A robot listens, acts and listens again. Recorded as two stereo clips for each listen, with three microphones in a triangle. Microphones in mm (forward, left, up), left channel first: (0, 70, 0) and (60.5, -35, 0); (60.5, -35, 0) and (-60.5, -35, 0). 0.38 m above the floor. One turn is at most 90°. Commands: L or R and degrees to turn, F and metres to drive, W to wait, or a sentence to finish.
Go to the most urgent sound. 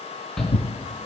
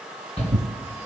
L35
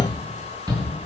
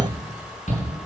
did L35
F1.0
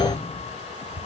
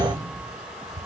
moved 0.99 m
F1.0
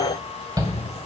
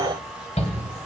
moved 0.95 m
F1.0
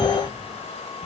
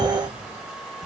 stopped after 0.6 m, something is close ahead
W
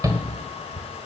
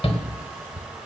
I am next to the shout.